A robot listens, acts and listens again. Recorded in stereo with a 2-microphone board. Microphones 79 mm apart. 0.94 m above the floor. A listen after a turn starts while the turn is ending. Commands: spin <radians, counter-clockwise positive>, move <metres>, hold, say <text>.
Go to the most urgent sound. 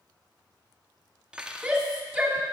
spin -0.52
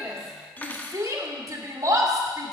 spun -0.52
spin -2.44
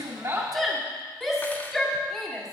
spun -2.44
move 1.0
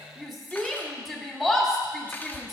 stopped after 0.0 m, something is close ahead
say Something is in my way. I am facing the shout but have not reached it.